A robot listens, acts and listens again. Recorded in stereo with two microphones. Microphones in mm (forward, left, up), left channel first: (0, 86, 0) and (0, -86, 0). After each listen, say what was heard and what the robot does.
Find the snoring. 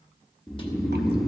Turn 30° left.
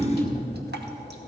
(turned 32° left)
So it is at 30° right. Turn 30° right.
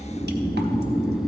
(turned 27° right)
Facing the snoring.